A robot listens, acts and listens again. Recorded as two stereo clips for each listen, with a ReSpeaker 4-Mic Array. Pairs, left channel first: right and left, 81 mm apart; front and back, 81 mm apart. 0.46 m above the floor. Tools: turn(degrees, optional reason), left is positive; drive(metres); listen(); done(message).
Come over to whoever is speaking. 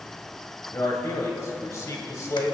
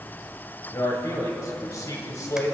turn(degrees=-40, reason="The man speaking: 40° right.")
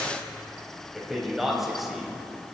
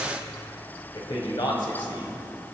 drive(metres=1.0)
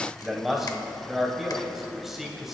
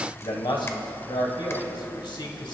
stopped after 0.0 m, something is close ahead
done("Blocked. The man speaking is further on, straight ahead.")